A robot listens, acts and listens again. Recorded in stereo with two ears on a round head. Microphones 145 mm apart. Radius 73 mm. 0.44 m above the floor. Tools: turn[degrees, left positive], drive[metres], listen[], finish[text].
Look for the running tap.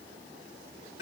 Action: listen[]
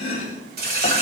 Thought: The running tap: about 65° right or 115° right.
Action: turn[-65]
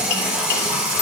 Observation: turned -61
Thought: So it is at 10° right.
Action: turn[-10]
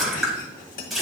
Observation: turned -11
Action: finish[Found it: a running tap, straight ahead.]